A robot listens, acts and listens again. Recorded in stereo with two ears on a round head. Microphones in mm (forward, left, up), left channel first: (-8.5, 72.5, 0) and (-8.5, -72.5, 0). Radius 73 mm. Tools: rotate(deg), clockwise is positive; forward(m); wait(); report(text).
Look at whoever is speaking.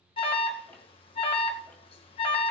wait()
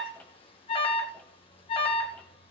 wait()
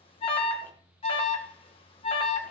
report("I can't make out anyone speaking, only an alarm.")